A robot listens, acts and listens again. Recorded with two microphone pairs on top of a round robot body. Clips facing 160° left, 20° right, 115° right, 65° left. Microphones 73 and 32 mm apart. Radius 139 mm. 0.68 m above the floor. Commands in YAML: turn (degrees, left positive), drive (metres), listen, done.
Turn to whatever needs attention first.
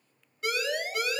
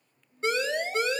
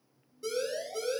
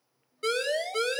turn: 45
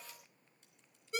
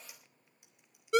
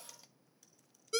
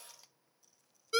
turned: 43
done: "Facing the siren."